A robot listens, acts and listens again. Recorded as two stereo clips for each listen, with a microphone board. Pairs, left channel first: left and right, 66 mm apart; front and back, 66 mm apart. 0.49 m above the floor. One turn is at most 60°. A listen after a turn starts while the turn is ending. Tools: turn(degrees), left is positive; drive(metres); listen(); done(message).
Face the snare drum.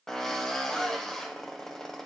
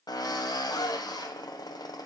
listen()
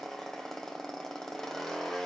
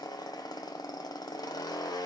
listen()
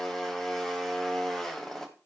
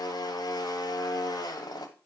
done("I can't make out a snare drum, only a drill.")